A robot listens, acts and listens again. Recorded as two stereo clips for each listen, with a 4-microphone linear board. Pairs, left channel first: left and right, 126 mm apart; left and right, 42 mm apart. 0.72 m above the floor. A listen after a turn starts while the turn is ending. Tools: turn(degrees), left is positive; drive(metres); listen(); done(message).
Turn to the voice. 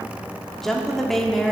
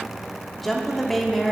turn(degrees=30)
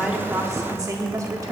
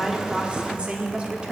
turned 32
turn(degrees=-30)
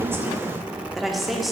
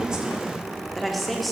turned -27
done("Found it: a woman speaking, straight ahead, 1 to 2 m away.")